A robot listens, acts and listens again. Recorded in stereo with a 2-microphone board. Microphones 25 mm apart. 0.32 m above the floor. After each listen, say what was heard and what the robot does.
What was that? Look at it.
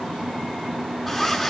Turn 30° left.
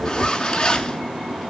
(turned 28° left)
So it is at 155° left. Turn 155° left.
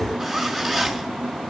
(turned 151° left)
Found it: a zipper, straight ahead, 2 to 4 m away.